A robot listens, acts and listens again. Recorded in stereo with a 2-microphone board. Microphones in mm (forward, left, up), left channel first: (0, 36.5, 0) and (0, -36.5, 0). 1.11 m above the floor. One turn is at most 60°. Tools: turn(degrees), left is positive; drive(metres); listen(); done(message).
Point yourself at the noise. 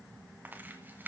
turn(degrees=-25)
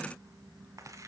turn(degrees=-60)
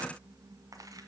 turn(degrees=-60)
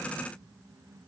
listen()
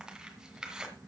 turn(degrees=-10)
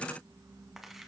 done("Facing the tearing paper.")